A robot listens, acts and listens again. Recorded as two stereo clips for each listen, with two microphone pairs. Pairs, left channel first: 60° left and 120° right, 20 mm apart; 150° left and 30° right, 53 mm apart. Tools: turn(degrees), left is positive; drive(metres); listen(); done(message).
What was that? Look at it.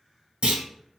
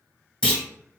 turn(degrees=-125)
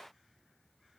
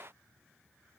done("Facing where the clunk came from. I can't hear it now.")